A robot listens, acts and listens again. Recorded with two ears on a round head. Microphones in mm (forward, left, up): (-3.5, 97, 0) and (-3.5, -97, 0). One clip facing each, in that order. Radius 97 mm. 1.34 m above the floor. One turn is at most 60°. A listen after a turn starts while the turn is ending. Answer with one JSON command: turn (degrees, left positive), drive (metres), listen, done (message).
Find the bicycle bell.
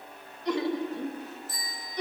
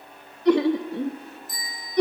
{"turn": -15}
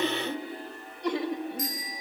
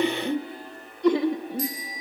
{"turn": -60}
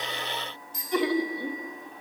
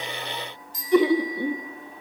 {"turn": -60}
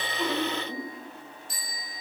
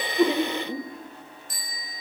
{"turn": -50}
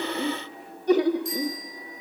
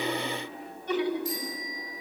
{"done": "Found it: a bicycle bell, straight ahead."}